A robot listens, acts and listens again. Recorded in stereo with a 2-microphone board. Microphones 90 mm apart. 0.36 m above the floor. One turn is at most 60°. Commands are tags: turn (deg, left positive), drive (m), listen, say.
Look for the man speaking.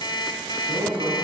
<turn deg="-60"/>
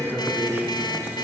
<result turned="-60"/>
<turn deg="-20"/>
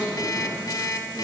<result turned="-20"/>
<say>Found it: a man speaking, straight ahead, 2 to 4 m away.</say>